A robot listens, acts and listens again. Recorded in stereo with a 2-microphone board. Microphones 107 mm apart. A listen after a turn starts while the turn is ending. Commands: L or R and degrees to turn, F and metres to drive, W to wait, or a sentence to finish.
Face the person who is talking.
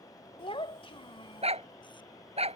L60
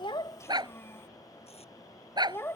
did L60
L30
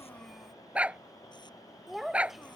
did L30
Found it: a child speaking, straight ahead.